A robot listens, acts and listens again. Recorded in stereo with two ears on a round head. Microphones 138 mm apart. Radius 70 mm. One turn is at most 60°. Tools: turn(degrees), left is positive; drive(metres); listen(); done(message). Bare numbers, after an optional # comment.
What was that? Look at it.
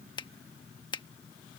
# The finger snap: about 30° left or 150° left.
turn(30)
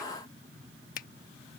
# So it is at 120° left.
turn(60)
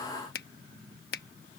# The finger snap is now 65° left.
turn(60)
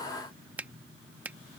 # The finger snap is now 10° right.
turn(-10)
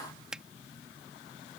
done("Facing the finger snap.")